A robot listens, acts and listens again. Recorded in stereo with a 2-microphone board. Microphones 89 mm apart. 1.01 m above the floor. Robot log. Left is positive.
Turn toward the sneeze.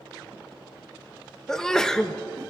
cmd yaw +30
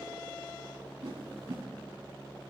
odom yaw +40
cmd idle
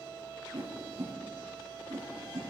end: I heard a sneeze, but can't make it out now. It was about 35° right or 135° left.